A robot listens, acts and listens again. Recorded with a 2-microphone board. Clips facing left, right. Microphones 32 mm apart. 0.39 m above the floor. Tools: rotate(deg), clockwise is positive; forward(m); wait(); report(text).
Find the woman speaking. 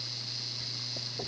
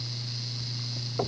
wait()
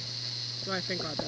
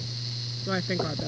rotate(30)
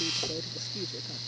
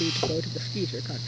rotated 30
rotate(140)
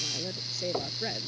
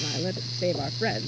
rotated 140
rotate(35)
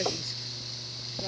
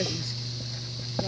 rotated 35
wait()
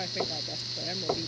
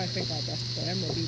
wait()
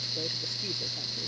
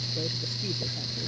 report("I heard a woman speaking from this way, but can't make it out now.")